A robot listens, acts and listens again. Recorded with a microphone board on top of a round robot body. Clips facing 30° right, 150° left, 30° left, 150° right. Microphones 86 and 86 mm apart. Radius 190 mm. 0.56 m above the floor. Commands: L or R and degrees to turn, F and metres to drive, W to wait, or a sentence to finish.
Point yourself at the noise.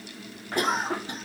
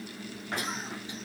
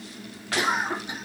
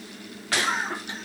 R45
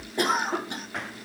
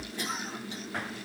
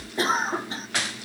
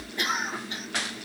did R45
R20
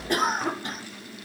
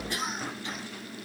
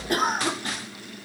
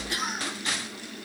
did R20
Found it: a cough, straight ahead.